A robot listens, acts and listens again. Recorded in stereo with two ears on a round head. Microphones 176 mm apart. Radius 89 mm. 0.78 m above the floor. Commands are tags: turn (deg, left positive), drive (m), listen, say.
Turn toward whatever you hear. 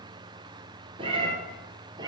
<turn deg="-20"/>
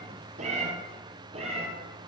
<turn deg="-35"/>
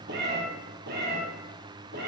<turn deg="-125"/>
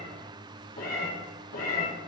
<turn deg="45"/>
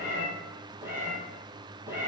<turn deg="-10"/>
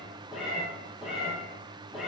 <say>Facing the cat meowing, 2 to 4 m away.</say>